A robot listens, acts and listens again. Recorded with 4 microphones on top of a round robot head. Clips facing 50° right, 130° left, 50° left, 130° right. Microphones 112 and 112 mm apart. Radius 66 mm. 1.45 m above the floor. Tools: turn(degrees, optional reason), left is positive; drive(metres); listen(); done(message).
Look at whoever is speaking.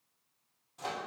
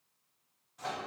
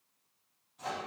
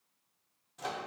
listen()
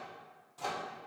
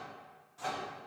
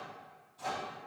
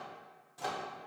listen()
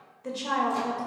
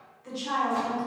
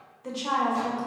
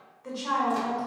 turn(degrees=-20, reason="The woman speaking: 20° right.")
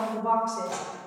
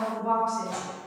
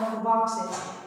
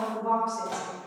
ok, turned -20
done("Found it: a woman speaking, straight ahead, 1 to 2 m away.")